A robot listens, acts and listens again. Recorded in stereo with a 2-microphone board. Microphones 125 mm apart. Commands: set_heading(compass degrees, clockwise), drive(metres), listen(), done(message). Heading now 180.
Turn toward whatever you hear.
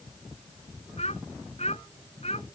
set_heading(115)
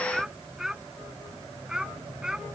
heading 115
done("Facing the child speaking.")